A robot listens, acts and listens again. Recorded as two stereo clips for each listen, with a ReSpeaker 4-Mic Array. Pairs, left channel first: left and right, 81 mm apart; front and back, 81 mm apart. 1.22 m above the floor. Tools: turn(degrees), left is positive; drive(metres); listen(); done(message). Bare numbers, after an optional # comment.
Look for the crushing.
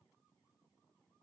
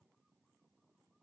listen()
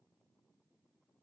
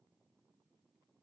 listen()
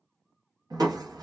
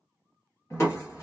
# The crushing: 55° right.
turn(-55)
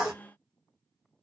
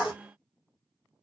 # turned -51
done("Found it: crushing, straight ahead, 1 to 2 m away.")